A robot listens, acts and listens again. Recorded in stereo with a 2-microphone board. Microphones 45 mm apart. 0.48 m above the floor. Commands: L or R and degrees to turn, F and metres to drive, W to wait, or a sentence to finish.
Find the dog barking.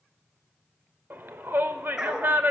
R15
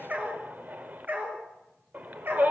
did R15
R130
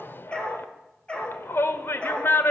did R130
L25
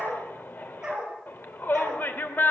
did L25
R15
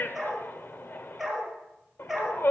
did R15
Facing the dog barking, 2 to 4 m away.